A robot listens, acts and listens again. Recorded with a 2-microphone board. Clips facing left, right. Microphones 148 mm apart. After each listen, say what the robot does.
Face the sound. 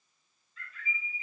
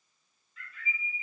Turn 40° left.
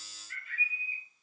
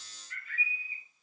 Turn 100° left.
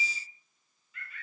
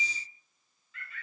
Turn 20° left.
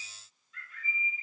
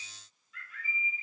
Found it: a bird, straight ahead, 1 to 2 m away.